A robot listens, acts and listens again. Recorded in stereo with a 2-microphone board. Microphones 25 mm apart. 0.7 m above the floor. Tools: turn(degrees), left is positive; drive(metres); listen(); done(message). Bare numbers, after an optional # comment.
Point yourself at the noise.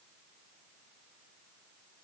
listen()
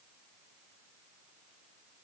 listen()
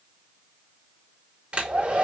# The hair dryer: about 50° right or 130° right.
turn(-50)
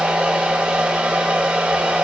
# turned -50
# So it is at 75° right.
turn(-75)
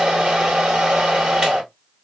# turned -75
# The hair dryer is now 35° right.
turn(-35)
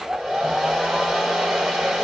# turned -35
# The hair dryer is now 20° right.
turn(-20)
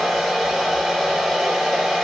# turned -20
# The hair dryer is now 10° right.
turn(-10)
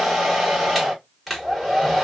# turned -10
done("Facing the hair dryer, 1 to 2 m away.")